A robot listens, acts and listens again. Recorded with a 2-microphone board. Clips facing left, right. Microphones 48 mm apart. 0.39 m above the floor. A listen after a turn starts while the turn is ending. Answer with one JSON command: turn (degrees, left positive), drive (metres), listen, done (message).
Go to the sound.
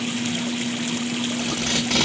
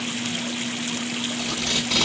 {"turn": 55}
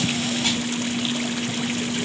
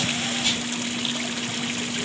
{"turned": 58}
{"listen": true}
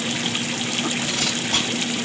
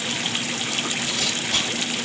{"turn": 55}
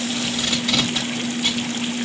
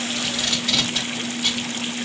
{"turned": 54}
{"drive": 1.0}
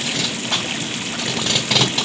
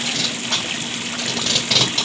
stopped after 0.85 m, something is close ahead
{"turn": 10}
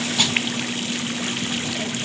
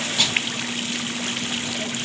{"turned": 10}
{"done": "I am next to the tape being pulled."}